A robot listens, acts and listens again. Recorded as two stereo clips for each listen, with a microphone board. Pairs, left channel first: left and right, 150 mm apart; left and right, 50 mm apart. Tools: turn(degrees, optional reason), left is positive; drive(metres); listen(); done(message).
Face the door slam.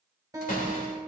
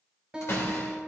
turn(degrees=65, reason="The door slam: about 65° left or 115° left.")
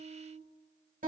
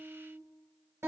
listen()
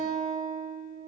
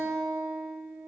done("I heard a door slam, but can't make it out now. It was about straight ahead or 50° left.")